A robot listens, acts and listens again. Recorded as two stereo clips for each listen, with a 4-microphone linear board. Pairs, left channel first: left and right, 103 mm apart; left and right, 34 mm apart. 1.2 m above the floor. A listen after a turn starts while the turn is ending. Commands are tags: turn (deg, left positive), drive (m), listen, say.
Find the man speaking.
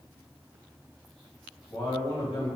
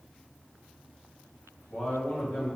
<turn deg="55"/>
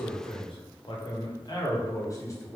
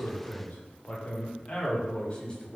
<turn deg="25"/>
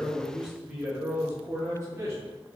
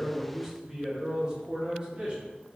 <turn deg="-30"/>
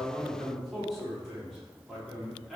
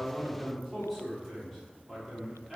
<say>Found it: a man speaking, straight ahead.</say>